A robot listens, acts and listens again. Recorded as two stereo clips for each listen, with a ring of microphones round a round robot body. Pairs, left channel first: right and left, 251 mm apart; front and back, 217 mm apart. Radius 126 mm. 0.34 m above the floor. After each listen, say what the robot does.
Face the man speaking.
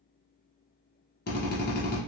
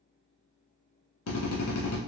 Keep listening.
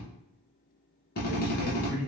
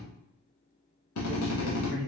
Facing the man speaking.